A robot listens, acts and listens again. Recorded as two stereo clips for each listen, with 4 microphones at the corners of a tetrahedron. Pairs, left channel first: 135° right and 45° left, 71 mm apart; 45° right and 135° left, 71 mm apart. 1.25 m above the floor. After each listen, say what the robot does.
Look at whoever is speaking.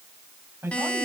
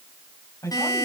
Turn 10° right.
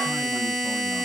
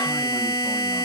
Keep listening.
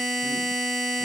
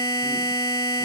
Keep listening.
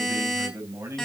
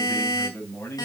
Found it: a man speaking, straight ahead.